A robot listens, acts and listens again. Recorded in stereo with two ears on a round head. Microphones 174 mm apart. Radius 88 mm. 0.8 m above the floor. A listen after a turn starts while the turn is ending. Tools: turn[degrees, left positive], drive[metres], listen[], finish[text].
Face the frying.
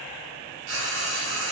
Action: turn[-90]
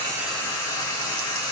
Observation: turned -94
Thought: So it is at 15° left.
Action: turn[15]
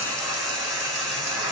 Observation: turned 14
Action: finish[Found it: frying, straight ahead.]